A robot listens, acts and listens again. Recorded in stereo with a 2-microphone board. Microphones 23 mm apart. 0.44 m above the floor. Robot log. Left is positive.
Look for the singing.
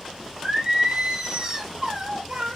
note: The singing: about 30° right or 150° right.
cmd yaw -30
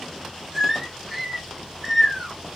end: Facing the singing.